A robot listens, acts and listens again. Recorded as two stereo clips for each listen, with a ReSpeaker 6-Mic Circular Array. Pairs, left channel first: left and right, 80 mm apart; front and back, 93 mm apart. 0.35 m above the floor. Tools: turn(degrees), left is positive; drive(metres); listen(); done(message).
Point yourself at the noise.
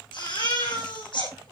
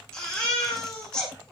turn(degrees=80)
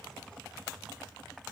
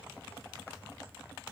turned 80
listen()
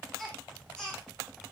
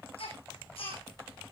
turn(degrees=10)
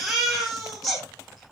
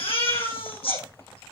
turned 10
done("Found it: a baby crying, straight ahead, over 4 m away.")